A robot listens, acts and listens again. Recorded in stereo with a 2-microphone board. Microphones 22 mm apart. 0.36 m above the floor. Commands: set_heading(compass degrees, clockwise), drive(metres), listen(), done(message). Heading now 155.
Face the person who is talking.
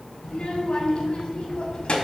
set_heading(95)
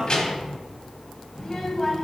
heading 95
set_heading(80)
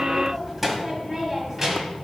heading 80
set_heading(100)
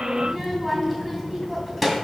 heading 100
done("Facing the child speaking.")